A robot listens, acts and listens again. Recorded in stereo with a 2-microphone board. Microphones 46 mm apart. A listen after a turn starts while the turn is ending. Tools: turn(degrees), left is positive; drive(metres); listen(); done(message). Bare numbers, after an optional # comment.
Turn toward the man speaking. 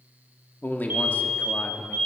# The man speaking: about 30° left or 150° left.
turn(30)
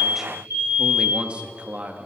# So it is at 40° right.
turn(-40)
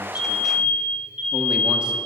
listen()
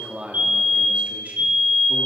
# The man speaking is now 30° right.
turn(-30)
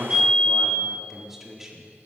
# The man speaking is now 10° right.
turn(-10)
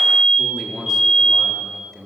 done("Found it: a man speaking, straight ahead.")